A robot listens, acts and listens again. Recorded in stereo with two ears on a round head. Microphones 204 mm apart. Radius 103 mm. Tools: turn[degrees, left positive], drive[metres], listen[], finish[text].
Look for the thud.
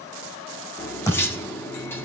Action: turn[30]
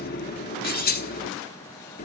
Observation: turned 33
Action: listen[]
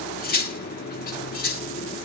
Action: finish[I heard a thud, but can't make it out now. It was about 20° right or 135° left.]